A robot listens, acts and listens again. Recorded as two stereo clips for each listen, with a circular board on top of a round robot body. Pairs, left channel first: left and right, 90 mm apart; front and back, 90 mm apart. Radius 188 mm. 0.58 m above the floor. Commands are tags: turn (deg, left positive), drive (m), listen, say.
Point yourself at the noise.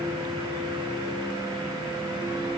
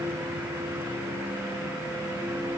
<listen/>
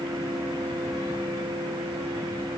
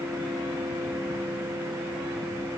<listen/>
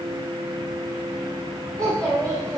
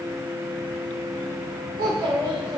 <turn deg="-140"/>
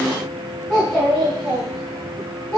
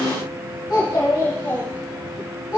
<say>Facing the child speaking.</say>